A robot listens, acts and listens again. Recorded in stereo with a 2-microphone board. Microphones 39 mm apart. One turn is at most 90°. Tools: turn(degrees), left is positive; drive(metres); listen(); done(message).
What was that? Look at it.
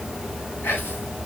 turn(degrees=65)
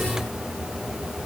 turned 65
listen()
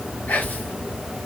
turn(degrees=50)
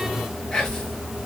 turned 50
turn(degrees=15)
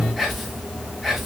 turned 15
done("Found it: whispering, straight ahead.")